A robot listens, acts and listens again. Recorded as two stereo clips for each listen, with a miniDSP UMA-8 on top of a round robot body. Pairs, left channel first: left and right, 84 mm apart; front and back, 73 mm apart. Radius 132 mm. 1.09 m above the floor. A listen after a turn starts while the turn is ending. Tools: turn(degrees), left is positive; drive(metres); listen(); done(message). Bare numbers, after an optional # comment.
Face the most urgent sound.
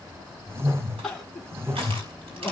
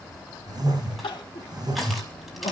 done("Facing the crying, 1 to 2 m away.")